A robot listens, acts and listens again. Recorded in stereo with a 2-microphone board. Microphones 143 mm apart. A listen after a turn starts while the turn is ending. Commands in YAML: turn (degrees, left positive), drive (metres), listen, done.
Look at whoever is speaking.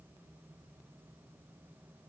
listen: true
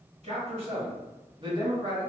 turn: -30
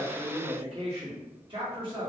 turn: -35
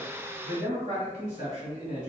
turn: -125
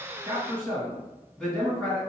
done: "Found it: a man speaking, straight ahead."